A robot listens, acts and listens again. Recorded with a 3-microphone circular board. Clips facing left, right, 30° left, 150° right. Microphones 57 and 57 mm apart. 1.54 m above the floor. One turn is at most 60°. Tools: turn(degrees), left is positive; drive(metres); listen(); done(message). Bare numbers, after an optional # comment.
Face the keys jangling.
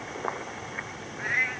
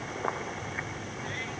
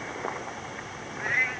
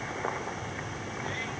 listen()
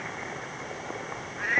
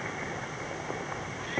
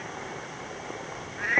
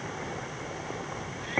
listen()
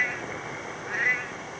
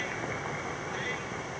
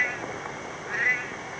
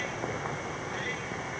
done("I can't make out keys jangling, only a cat meowing.")